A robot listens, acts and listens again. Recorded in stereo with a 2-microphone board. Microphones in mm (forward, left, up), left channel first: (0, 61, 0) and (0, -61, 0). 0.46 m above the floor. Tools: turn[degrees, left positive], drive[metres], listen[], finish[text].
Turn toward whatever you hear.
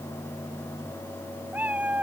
Action: turn[-30]
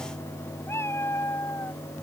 Thought: So it is at 20° left.
Action: turn[20]
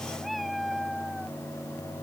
Action: finish[Facing the cat meowing.]